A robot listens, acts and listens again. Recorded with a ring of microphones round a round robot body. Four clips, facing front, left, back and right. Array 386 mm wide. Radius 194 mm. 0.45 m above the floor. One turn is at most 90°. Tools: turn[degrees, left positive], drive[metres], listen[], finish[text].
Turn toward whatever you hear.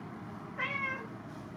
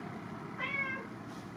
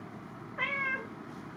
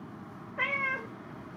Thought: The cat meowing: 110° right.
Action: turn[-90]
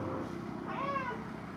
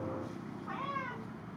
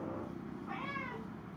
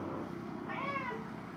Thought: The cat meowing is now 15° right.
Action: turn[-15]
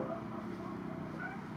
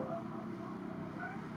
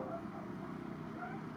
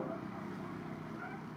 Action: listen[]
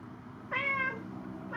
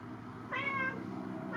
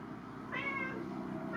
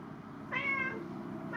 Action: finish[Facing the cat meowing, under 1 m away.]